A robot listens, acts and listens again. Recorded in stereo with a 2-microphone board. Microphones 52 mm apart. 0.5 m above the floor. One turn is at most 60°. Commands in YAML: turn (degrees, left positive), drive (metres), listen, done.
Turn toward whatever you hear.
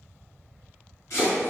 turn: 60
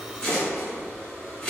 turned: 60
turn: 15
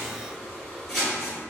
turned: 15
done: "Facing the chopping, 1 to 2 m away."